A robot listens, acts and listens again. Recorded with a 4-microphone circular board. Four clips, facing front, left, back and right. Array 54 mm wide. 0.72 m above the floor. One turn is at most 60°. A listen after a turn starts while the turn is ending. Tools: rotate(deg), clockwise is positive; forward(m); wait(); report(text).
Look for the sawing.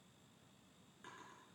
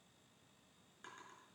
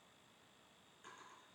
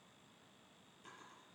wait()
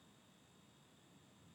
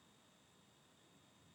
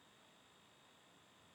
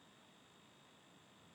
wait()
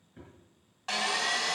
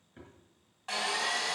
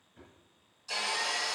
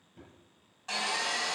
rotate(-15)
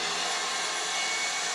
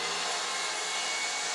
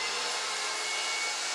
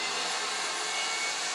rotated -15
report("Found it: sawing, straight ahead, 2 to 4 m away.")